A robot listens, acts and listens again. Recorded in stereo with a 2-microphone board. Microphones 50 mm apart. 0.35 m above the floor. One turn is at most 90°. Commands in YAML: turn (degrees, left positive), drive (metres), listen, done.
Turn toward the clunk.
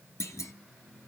turn: 90
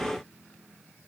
done: "I heard a clunk from this way, but can't make it out now."